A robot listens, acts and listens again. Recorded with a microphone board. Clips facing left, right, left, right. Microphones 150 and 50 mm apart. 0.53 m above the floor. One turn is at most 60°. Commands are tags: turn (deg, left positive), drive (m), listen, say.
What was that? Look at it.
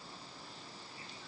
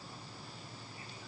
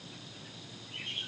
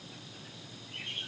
<listen/>
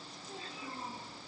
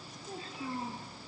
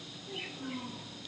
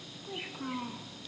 <turn deg="-60"/>
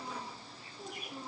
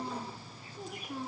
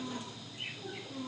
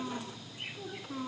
<turn deg="-60"/>
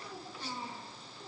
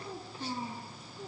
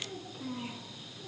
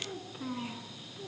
<turn deg="-35"/>
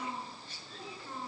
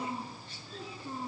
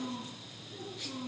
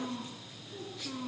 <turn deg="-20"/>
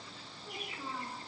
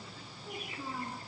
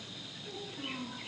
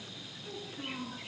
<turn deg="-10"/>
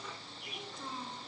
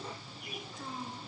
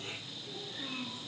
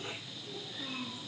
<say>Found it: a child speaking, straight ahead, over 4 m away.</say>